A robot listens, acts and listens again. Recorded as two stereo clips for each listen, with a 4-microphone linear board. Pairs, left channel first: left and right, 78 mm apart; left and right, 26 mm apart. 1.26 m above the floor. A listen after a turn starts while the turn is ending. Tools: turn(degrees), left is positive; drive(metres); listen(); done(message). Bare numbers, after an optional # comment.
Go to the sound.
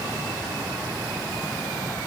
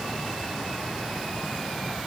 listen()
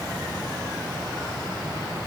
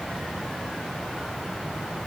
listen()
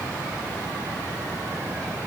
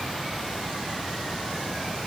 done("I can't make out anything to turn to.")